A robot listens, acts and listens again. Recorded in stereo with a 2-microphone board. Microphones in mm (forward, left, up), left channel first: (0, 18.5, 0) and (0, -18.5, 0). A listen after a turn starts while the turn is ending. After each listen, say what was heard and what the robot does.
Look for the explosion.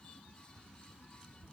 Keep listening.
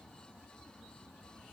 Keep listening.
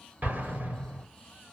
The explosion: about 50° right or 130° right. Turn 50° right.
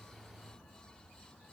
Keep listening.
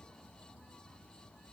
I heard an explosion, but can't make it out now. It was about straight ahead or 80° right.